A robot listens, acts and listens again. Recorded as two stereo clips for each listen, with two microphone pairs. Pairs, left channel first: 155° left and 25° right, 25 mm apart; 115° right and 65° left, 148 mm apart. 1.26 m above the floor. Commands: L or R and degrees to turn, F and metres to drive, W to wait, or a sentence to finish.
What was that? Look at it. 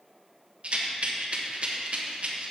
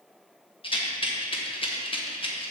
R60
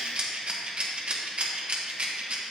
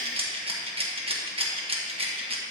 L20
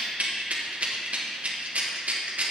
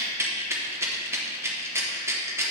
Facing the rattle.